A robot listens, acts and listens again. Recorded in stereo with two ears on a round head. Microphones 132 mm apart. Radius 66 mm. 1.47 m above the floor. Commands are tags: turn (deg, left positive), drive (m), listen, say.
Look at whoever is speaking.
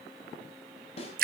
<listen/>
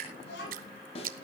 <turn deg="90"/>
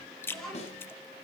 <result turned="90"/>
<say>Facing the child speaking.</say>